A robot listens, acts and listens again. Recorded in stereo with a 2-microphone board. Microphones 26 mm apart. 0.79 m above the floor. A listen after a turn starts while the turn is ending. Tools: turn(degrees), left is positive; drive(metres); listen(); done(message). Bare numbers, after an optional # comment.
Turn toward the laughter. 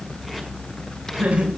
# The laughter: about 65° right or 115° right.
turn(-65)
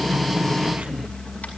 listen()
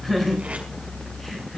done("Found it: laughter, straight ahead.")